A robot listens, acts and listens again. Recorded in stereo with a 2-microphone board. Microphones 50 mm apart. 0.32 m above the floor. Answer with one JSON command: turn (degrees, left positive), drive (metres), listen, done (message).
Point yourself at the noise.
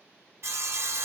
{"turn": -60}
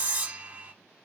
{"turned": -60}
{"turn": -35}
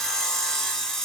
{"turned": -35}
{"turn": 10}
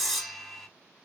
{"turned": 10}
{"done": "Found it: sawing, straight ahead, 1 to 2 m away."}